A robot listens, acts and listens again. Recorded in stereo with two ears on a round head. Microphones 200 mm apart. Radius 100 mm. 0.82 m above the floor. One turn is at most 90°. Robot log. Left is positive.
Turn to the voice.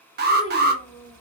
note: The child speaking: about 20° left or 160° left.
cmd yaw +20
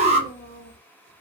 note: The child speaking: about 25° left or 155° left.
cmd yaw +25
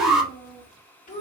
note: The child speaking: about 35° left or 145° left.
cmd yaw +35
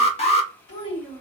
note: So it is at 120° left.
cmd yaw +90
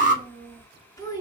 note: The child speaking is now 20° left.
cmd yaw +20
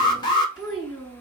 end: Found it: a child speaking, straight ahead, 2 to 4 m away.